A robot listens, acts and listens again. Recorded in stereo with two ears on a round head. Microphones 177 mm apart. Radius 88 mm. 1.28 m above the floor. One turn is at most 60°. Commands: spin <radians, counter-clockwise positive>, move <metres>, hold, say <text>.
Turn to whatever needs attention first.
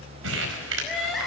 spin 0.52
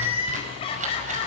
spin 1.05
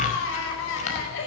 spin 1.05
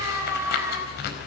spin -0.26
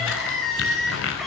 say Facing the crying.